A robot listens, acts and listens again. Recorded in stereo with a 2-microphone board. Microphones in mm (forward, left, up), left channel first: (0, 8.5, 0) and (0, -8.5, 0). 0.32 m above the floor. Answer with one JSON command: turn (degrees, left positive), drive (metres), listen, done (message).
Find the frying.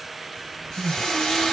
{"turn": 50}
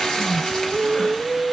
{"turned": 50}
{"turn": 70}
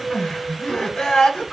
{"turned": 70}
{"listen": true}
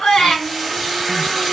{"done": "Facing the frying."}